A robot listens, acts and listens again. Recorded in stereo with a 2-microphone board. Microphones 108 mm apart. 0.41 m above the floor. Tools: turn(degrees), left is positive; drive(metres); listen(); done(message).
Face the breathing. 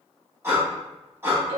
turn(degrees=-20)
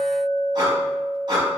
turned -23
turn(degrees=-140)
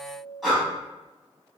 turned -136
done("Facing the breathing.")